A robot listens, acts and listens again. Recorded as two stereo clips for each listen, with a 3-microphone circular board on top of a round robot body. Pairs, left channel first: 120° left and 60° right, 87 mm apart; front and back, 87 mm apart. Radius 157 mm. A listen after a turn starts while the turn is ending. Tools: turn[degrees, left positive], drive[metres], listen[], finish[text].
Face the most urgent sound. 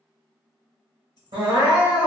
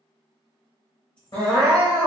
Thought: The crying: 30° right.
Action: turn[-30]
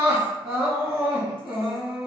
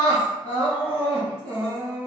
Thought: The crying is now 10° right.
Action: turn[-10]
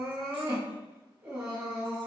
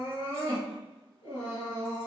Action: finish[Found it: crying, straight ahead, under 1 m away.]